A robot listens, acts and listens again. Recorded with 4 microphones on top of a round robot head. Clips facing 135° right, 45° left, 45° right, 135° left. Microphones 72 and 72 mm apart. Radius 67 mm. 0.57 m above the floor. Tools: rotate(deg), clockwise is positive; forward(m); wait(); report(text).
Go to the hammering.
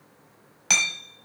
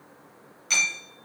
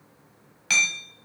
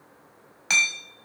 rotate(155)
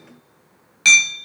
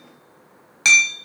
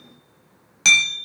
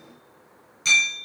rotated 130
rotate(25)
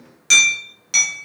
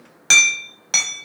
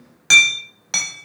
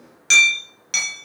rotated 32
forward(1.0)
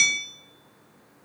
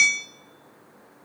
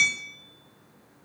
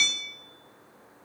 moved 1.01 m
rotate(-15)
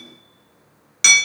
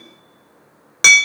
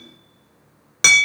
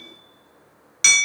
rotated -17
forward(1.0)
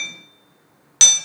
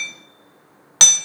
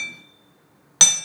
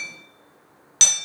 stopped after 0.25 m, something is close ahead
report("I am next to the hammering.")